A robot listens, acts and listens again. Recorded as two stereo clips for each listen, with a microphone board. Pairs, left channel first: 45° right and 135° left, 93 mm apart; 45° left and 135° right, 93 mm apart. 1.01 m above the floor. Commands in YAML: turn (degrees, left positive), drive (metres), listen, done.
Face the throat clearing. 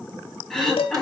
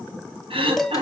turn: -130
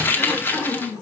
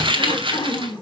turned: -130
turn: 25
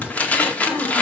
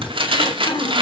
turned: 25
turn: 20
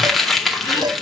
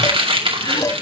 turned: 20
listen: true
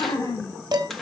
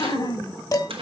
done: "Facing the throat clearing."